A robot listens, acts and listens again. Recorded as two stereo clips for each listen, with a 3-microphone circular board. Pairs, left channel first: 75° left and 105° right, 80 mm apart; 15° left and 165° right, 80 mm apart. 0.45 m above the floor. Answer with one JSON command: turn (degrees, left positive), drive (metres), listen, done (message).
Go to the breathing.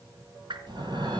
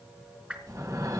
{"turn": -120}
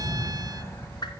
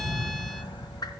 {"turn": 15}
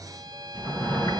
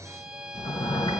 {"drive": 1.0}
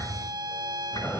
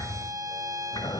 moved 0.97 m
{"drive": 1.0}
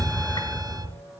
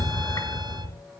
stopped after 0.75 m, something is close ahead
{"turn": 10}
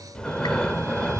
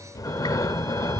{"done": "Arrived at the breathing, straight ahead."}